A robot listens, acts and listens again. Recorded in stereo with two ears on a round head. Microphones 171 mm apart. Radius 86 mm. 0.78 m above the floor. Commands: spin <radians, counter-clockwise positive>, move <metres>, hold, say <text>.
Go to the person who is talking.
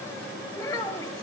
spin 0.35
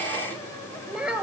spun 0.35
move 1.0
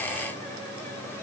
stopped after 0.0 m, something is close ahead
hold
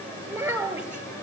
spin -0.17
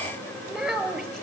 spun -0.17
say Something is in my way. I am facing the child speaking but have not reached it.